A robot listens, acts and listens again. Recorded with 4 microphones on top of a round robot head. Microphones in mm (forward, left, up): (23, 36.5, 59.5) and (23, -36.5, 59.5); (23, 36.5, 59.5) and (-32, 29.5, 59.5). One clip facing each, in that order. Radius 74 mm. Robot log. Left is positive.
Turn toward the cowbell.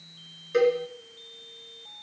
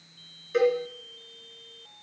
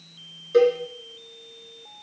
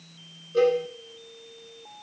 end: Facing the cowbell.